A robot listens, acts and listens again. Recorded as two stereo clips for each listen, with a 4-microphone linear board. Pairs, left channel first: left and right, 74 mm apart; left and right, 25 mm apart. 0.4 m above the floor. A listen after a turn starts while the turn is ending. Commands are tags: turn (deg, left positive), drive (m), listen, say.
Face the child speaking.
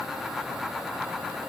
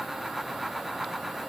<listen/>
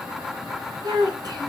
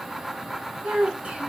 <turn deg="-65"/>
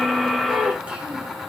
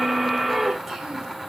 <listen/>
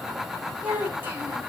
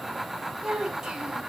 <turn deg="-25"/>
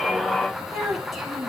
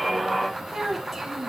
<say>Facing the child speaking.</say>